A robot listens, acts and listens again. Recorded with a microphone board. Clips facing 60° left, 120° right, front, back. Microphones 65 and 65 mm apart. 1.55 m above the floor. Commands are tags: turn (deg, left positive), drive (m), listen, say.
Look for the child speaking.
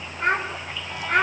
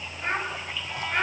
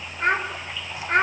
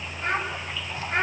<turn deg="30"/>
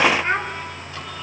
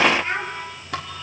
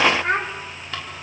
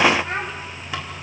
<say>Found it: a child speaking, straight ahead.</say>